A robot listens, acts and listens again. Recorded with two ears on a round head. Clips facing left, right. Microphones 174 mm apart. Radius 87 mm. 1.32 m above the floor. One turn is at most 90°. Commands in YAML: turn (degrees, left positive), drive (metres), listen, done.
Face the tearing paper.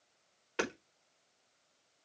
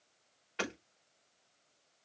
listen: true
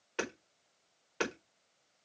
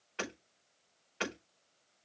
listen: true
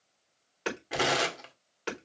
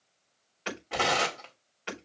turn: 30
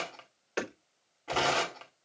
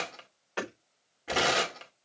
turn: -20
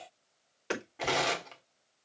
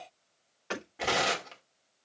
done: "Facing the tearing paper, 1 to 2 m away."